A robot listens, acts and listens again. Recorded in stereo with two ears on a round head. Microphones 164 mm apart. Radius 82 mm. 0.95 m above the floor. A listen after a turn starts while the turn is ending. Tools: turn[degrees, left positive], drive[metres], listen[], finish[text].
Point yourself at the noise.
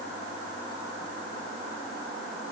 Action: listen[]
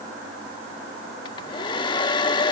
Thought: The hair dryer: about 25° left or 155° left.
Action: turn[25]
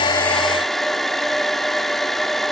Action: finish[Found it: a hair dryer, straight ahead.]